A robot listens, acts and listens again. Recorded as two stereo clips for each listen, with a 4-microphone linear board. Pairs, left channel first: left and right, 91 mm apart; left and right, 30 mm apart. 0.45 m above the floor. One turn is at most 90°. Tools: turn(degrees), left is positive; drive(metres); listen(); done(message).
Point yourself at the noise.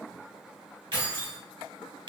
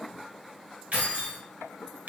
turn(degrees=-65)
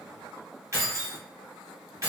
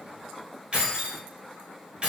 turn(degrees=-40)
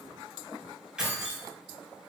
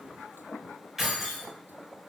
turn(degrees=-10)
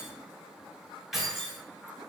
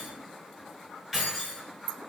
done("Facing the keys jangling, 1 to 2 m away.")